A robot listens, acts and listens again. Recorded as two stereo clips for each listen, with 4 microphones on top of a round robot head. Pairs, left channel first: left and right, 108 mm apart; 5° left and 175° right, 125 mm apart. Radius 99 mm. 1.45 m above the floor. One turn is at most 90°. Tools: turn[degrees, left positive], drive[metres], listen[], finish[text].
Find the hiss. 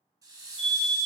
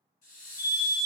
Thought: The hiss: 35° right.
Action: turn[-35]
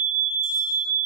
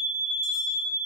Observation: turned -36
Action: listen[]
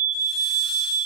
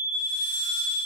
Action: listen[]
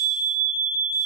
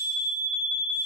Action: finish[Facing where the hiss came from. I can't hear it now.]